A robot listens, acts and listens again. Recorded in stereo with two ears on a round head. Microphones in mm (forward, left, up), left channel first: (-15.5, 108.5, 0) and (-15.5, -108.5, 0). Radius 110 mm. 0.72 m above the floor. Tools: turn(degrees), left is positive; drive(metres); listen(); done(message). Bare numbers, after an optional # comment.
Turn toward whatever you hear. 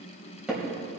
turn(-30)
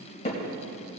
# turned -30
# So it is at 25° left.
turn(25)
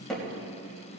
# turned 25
done("Found it: hammering, straight ahead, 2 to 4 m away.")